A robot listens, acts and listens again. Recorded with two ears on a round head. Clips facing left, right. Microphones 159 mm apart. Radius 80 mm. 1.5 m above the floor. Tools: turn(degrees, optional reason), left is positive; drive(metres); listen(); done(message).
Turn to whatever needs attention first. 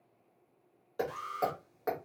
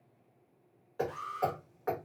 turn(degrees=55, reason="The alarm: about 55° left or 125° left.")
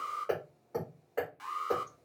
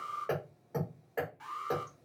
turn(degrees=65, reason="So it is at 65° left.")
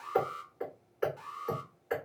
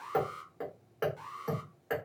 done("Found it: an alarm, straight ahead.")